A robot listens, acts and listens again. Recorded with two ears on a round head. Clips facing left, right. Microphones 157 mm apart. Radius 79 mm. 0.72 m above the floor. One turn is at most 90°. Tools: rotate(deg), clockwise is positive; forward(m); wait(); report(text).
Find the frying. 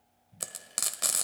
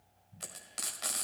rotate(-60)
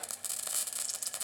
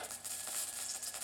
rotate(-60)
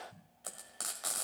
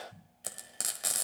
rotate(25)
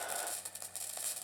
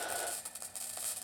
report("Facing the frying, 1 to 2 m away.")